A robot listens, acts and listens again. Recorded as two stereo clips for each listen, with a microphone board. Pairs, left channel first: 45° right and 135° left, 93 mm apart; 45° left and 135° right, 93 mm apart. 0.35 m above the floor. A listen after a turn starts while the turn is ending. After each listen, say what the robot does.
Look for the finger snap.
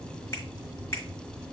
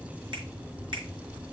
Turn 105° right.
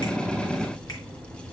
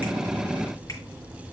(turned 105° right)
Keep listening.
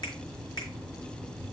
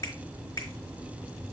Turn 10° right.
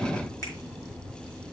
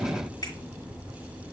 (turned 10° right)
Keep listening.
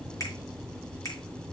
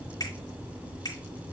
Facing the finger snap, over 4 m away.